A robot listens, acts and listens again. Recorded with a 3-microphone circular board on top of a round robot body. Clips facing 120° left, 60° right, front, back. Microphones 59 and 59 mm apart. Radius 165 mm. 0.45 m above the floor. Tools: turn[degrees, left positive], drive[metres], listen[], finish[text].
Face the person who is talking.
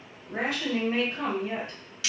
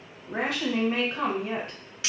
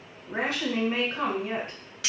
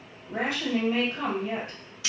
Thought: The woman speaking: 35° right.
Action: turn[-35]
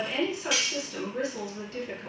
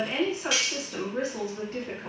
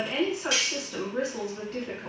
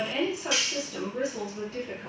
Action: finish[Facing the woman speaking, 1 to 2 m away.]